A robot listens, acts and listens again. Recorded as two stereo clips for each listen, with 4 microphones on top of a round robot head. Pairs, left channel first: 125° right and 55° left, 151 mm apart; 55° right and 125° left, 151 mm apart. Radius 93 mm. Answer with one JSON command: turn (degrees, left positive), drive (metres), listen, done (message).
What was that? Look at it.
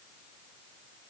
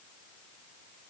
{"listen": true}
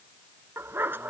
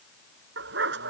{"turn": 135}
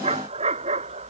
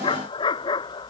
{"done": "Facing the dog barking."}